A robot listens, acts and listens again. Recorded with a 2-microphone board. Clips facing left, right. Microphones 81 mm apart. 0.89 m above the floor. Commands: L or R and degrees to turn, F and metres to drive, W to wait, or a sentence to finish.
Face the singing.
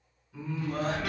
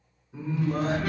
R25
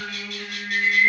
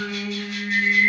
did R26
R125
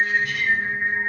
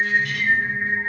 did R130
Found it: singing, straight ahead.